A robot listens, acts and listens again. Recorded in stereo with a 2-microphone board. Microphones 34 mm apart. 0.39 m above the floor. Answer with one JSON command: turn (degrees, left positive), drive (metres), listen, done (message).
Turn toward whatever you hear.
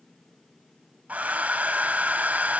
{"turn": -50}
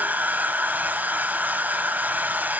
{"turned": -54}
{"turn": -75}
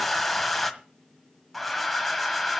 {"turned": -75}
{"done": "Found it: a hair dryer, straight ahead, 1 to 2 m away."}